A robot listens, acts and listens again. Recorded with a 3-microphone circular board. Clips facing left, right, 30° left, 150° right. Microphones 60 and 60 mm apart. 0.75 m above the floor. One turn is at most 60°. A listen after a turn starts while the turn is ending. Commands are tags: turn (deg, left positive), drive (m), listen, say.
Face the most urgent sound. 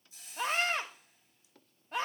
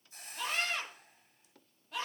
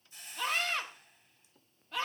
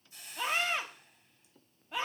<turn deg="60"/>
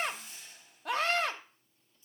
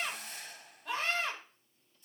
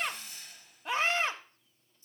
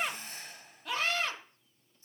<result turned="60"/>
<turn deg="60"/>
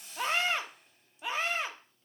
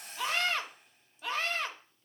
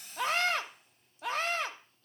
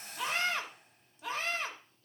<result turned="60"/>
<turn deg="20"/>
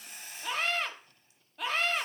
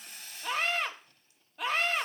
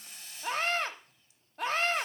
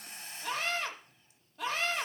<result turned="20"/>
<say>Found it: a scream, straight ahead, 1 to 2 m away.</say>